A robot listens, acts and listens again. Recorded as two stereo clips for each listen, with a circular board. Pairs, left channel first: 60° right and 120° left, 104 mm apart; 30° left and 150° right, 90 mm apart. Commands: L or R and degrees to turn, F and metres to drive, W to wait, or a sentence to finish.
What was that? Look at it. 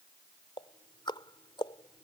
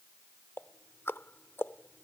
R30
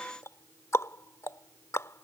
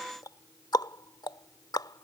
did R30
Found it: ticking, straight ahead.